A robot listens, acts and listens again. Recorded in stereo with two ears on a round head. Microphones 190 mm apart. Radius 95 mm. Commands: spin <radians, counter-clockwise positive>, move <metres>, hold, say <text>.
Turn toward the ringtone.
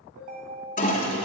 spin -0.70
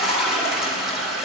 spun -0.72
hold
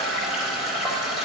hold
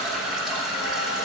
say I heard a ringtone, but can't make it out now. It was about straight ahead or 100° right.